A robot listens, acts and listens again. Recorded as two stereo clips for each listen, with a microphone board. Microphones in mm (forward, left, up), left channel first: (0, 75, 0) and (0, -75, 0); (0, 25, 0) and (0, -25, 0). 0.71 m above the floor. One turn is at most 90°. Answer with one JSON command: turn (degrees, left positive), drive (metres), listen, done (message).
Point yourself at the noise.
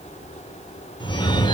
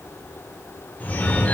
{"turn": 30}
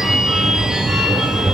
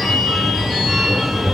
{"done": "Facing the phone ringing, 1 to 2 m away."}